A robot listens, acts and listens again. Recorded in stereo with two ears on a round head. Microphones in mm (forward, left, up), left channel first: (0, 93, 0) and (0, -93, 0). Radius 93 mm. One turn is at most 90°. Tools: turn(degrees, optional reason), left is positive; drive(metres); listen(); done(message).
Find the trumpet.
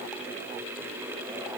listen()
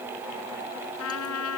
turn(degrees=90)
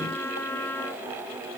turn(degrees=10, reason="So it is at 10° left.")
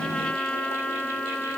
done("Facing the trumpet.")